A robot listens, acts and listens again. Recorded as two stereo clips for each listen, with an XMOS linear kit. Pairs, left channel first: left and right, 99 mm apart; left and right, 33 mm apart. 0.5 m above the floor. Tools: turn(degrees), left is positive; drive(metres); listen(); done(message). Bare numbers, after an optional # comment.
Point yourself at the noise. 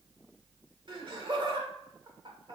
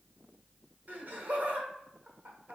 # The laughter: about 55° right or 125° right.
turn(-55)
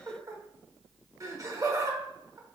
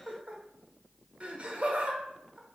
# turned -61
# So it is at 40° right.
turn(-40)
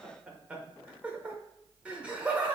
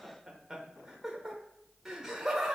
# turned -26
# The laughter is now 15° right.
turn(-15)
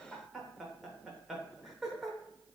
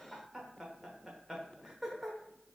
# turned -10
done("Found it: laughter, straight ahead.")